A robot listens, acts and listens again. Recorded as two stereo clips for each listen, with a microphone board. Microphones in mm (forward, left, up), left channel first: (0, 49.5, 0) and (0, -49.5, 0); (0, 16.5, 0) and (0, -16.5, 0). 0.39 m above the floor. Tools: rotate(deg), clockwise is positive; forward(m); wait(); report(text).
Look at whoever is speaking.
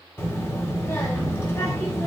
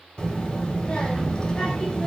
rotate(-25)
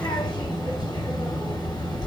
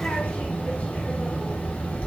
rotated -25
rotate(-125)
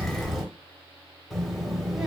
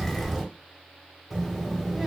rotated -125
report("Found it: a child speaking, straight ahead.")